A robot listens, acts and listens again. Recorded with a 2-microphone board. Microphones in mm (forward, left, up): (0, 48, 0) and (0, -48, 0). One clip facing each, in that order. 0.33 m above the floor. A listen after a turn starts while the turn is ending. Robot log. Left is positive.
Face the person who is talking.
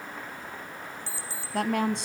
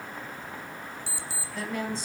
note: The woman speaking: about 70° left or 110° left.
cmd yaw +70
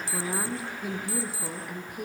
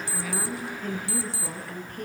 note: So it is at 10° left.
cmd yaw +10
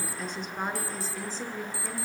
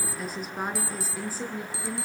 note: The woman speaking is now 10° right.
cmd yaw -10
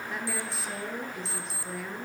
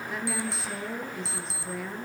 end: Found it: a woman speaking, straight ahead.